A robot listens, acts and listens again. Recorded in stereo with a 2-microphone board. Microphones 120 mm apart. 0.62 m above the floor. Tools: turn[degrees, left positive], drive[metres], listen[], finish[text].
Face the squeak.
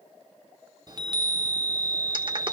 Action: listen[]
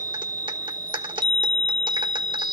Action: listen[]
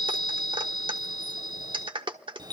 Action: finish[I can't make out a squeak to turn to.]